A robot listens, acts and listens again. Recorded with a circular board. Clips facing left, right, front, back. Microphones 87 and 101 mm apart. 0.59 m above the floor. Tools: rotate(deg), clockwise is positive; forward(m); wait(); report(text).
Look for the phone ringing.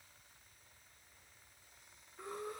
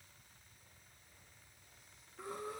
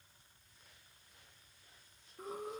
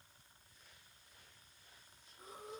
wait()
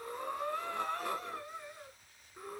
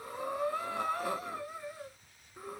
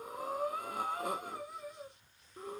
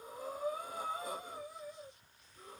wait()
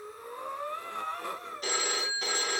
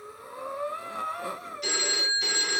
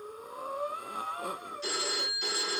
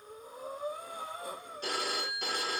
rotate(-140)
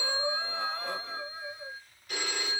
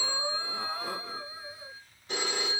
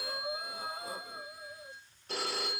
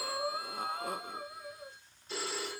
rotate(25)
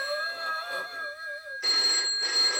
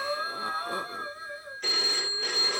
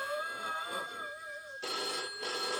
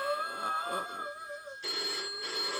rotate(-10)
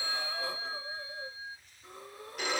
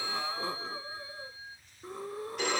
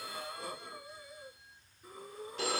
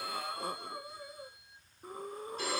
report("Found it: a phone ringing, straight ahead.")